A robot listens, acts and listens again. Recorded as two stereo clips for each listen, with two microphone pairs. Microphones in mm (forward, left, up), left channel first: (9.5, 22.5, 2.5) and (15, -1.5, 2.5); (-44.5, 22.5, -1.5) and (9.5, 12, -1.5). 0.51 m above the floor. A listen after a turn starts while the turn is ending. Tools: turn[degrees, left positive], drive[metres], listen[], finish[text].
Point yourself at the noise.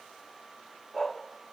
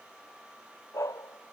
Thought: The dog barking: straight behind.
Action: turn[180]
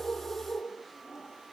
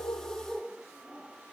Thought: The dog barking is now 70° left.
Action: turn[70]
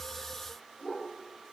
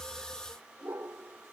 Thought: The dog barking is now 20° left.
Action: turn[20]
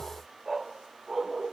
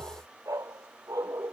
Action: finish[Facing the dog barking.]